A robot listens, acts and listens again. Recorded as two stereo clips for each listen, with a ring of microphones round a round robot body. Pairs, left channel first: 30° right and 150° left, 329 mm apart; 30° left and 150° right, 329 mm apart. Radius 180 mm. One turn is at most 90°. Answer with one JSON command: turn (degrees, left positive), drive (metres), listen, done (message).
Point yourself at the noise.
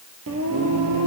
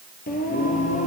{"turn": 90}
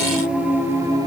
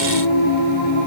{"turn": 70}
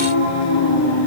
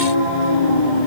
{"turn": 25}
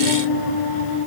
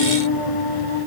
{"turn": 10}
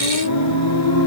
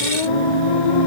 {"turn": 20}
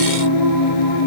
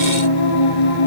{"done": "Facing the singing."}